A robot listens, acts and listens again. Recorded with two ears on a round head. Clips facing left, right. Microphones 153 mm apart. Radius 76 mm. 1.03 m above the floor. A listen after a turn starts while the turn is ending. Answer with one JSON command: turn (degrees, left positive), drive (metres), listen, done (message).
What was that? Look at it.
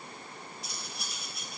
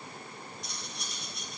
{"turn": 30}
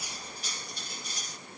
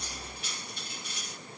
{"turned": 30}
{"turn": 145}
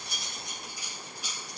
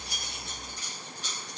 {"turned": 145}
{"turn": 10}
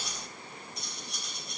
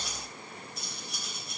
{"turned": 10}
{"done": "Found it: cutlery clinking, straight ahead, 2 to 4 m away."}